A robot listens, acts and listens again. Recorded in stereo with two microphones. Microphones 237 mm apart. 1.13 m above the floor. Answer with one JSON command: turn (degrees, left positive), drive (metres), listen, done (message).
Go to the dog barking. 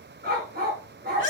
{"turn": -40}
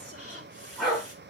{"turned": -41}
{"drive": 1.0}
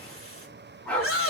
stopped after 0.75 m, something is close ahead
{"done": "Something is in my way. I am facing the dog barking but have not reached it."}